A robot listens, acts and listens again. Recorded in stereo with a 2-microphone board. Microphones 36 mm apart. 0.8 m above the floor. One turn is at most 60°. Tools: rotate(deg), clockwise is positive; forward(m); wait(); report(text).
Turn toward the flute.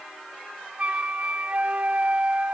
rotate(40)
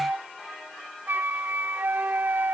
rotate(60)
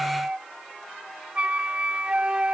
rotate(35)
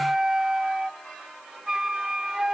rotate(15)
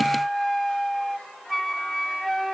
report("Facing the flute.")